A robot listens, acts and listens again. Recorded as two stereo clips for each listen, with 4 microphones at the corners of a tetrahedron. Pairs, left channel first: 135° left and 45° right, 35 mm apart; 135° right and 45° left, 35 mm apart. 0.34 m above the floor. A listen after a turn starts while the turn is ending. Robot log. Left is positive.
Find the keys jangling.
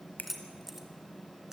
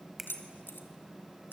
note: The keys jangling: 120° right.
cmd yaw -120
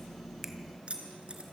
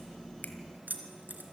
note: The keys jangling is now 10° left.
cmd yaw +10
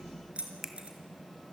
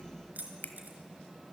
note: The keys jangling is now 10° left.
cmd yaw +10
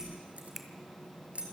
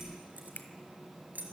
end: Found it: keys jangling, straight ahead.